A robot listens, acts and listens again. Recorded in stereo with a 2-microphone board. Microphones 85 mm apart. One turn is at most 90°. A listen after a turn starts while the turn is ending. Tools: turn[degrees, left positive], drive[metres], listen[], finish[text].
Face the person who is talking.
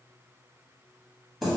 Action: listen[]
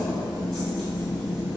Action: listen[]
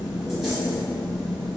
Action: finish[I can't make out anyone speaking, only keys jangling.]